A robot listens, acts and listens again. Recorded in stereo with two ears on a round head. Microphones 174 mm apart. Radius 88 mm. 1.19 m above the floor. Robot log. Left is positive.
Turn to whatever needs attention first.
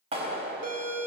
note: The siren: about 40° right or 140° right.
cmd yaw -40
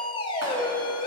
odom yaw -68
note: So it is at 25° left.
cmd yaw +25
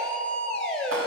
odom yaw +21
end: Facing the siren.